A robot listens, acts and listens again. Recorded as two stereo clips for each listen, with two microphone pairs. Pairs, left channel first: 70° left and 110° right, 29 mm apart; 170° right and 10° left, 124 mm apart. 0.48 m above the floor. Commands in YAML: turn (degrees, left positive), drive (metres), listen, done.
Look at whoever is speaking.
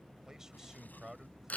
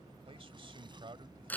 turn: -35
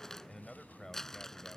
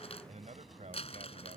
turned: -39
done: "Facing the man speaking."